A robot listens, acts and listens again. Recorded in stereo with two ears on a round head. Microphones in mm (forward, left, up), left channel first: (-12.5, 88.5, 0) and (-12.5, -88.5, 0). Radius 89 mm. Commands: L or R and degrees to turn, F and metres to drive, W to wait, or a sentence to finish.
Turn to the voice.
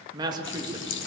R20
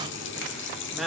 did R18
Facing the woman speaking.